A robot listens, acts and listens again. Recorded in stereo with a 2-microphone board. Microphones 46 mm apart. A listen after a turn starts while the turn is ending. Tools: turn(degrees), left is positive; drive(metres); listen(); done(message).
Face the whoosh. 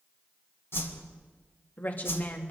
turn(degrees=65)
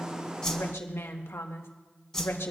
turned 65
turn(degrees=10)
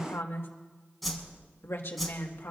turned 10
done("Found it: a whoosh, straight ahead, 2 to 4 m away.")